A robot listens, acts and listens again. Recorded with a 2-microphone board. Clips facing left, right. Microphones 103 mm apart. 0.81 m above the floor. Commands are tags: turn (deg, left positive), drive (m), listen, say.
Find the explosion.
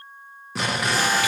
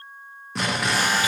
<turn deg="30"/>
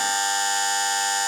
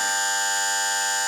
<listen/>
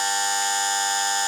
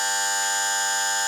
<say>I heard an explosion, but can't make it out now. It was about 30° right or 150° left.</say>